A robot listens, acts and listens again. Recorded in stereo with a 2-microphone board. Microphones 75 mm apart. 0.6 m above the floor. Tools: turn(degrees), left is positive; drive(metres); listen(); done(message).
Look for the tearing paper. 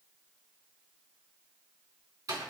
listen()
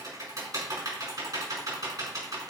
listen()
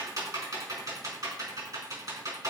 done("I can't make out tearing paper, only typing on a keyboard.")